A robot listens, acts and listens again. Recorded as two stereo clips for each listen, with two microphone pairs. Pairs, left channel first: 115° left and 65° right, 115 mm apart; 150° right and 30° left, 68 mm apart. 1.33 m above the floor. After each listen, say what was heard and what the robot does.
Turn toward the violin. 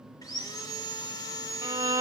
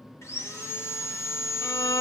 The violin: 125° right. Turn 125° right.
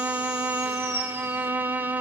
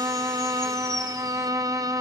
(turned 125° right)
Found it: a violin, straight ahead.